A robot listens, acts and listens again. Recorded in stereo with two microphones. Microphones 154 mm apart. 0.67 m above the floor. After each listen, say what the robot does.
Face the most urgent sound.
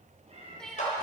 Turn 30° left.
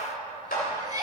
Turn 25° right.
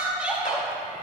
Turn 10° right.
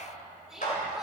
Facing the crying, 1 to 2 m away.